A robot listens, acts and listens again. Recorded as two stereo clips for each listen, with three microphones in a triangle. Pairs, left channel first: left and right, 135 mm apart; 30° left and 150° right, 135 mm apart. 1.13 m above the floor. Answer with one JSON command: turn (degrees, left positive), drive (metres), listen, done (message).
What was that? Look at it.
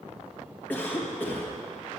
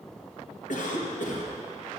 {"turn": 15}
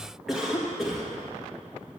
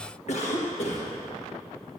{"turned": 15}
{"done": "Facing the cough."}